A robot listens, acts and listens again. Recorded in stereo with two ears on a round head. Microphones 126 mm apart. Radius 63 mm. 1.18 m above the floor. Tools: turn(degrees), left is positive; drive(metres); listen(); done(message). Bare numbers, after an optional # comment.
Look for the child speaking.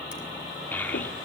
turn(30)
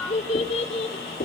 # So it is at 135° left.
turn(135)
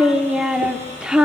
done("Found it: a child speaking, straight ahead, 1 to 2 m away.")